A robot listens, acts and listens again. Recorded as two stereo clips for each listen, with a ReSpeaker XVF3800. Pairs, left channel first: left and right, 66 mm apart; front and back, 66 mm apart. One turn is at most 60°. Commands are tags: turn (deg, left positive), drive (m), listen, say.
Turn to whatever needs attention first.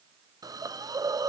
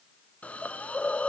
<listen/>
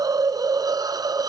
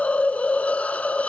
<listen/>
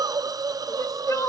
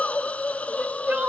<turn deg="60"/>
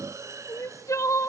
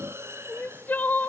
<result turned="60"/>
<turn deg="60"/>
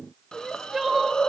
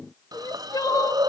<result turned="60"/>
<say>Facing the crying, under 1 m away.</say>